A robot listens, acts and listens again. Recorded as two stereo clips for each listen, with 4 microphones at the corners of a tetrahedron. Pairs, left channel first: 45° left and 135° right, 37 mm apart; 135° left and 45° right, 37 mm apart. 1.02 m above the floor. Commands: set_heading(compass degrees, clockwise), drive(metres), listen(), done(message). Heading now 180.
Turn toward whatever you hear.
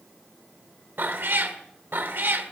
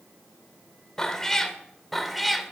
set_heading(310)
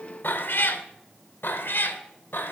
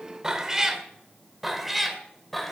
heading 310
set_heading(260)
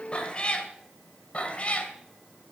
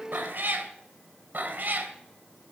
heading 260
set_heading(270)
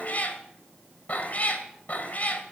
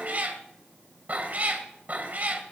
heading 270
done("Facing the cat meowing, 2 to 4 m away.")